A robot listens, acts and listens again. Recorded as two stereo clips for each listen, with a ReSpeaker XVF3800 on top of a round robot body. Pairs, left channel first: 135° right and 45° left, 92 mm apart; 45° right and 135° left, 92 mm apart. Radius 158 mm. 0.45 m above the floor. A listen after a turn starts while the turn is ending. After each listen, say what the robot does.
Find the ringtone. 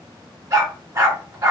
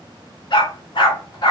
Keep listening.
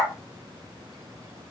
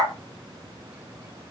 Keep listening.
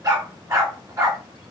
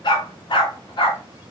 I can't make out a ringtone, only a dog barking.